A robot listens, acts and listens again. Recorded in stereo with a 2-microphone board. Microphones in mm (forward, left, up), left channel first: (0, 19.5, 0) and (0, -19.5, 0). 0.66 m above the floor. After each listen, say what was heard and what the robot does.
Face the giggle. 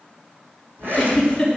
Turn 30° left.
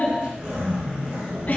Keep listening.
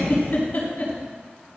So it is at 140° left. Turn 140° left.
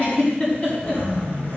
The giggle is now 30° left. Turn 30° left.
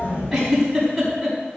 Facing the giggle, over 4 m away.